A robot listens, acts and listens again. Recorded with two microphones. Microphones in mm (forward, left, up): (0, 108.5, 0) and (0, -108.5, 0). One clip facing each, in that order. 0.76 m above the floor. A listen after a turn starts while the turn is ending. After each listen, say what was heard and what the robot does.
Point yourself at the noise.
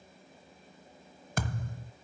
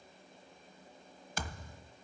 The thud: about 55° left or 125° left. Turn 55° left.
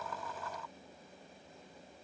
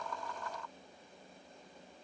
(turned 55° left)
Keep listening.
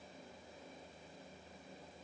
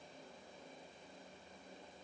I heard a thud, but can't make it out now. It was about straight ahead or 70° left.